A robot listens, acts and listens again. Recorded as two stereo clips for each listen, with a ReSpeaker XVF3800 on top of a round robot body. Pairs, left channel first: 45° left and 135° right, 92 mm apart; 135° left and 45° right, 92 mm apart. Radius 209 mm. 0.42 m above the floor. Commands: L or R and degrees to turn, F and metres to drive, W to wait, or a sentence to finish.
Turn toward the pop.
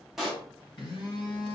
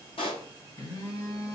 L140
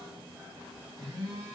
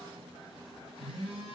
Facing where the pop came from. I can't hear it now.